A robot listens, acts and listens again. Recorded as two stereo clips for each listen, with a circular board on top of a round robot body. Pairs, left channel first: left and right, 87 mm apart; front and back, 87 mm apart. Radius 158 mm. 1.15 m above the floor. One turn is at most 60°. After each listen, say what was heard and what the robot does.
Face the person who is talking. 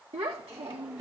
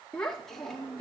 The child speaking: 90° right. Turn 60° right.
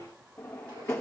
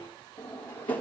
Nothing new. It was at 30° right. Turn 30° right.
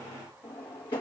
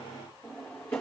Keep listening.
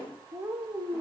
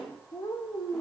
The child speaking is now 35° right. Turn 35° right.
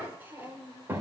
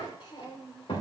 The child speaking is now 25° right. Turn 25° right.
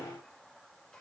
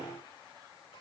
Keep listening.
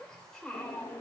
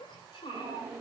The child speaking is now 10° left. Turn 10° left.
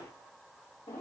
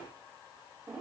Keep listening.
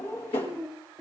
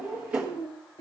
Facing the child speaking, 2 to 4 m away.